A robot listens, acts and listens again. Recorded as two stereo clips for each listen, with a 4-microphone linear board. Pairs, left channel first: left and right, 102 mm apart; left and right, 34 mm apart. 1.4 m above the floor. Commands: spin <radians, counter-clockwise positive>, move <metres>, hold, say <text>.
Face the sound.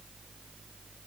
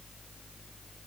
hold
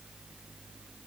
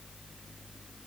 hold
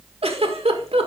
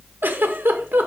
spin -1.31
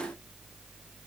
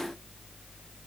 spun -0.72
hold
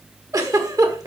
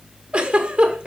spin -0.61
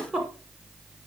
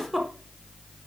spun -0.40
spin -0.17
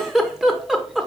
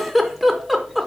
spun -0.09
say Found it: a giggle, straight ahead, 1 to 2 m away.